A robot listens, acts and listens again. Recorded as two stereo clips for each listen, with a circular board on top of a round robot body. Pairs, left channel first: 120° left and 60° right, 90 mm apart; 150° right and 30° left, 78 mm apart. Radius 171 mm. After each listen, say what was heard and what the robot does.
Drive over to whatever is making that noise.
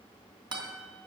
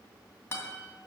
The guitar: 90° right. Turn 90° right.
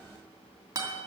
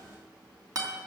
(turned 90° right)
The guitar is now 10° right. Turn 10° right.
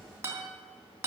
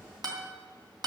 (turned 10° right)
Drive 1.0 m forward.
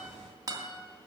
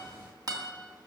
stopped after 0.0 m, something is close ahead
The guitar is now 10° right. Turn 10° right.
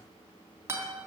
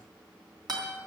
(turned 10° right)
Blocked. The guitar is further on, straight ahead.